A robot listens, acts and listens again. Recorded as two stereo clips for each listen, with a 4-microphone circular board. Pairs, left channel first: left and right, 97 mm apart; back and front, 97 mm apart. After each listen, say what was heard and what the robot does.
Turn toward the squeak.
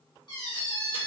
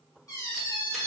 The squeak: 130° left. Turn 130° left.
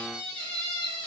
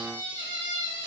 The squeak is now 15° left. Turn 15° left.
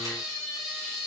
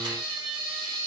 Found it: a squeak, straight ahead, 1 to 2 m away.